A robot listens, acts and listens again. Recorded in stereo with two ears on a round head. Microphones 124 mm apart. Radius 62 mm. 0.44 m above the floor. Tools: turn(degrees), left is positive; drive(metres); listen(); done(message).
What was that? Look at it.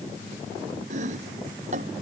turn(degrees=-55)
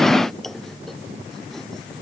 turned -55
done("Facing the chopping.")